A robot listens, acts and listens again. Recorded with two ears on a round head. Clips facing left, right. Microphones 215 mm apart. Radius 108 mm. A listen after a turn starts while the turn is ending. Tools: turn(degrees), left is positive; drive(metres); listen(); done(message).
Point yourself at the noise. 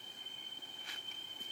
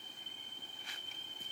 listen()
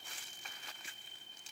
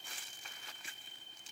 listen()
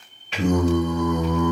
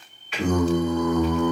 turn(degrees=35)
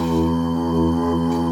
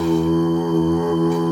done("Facing the singing.")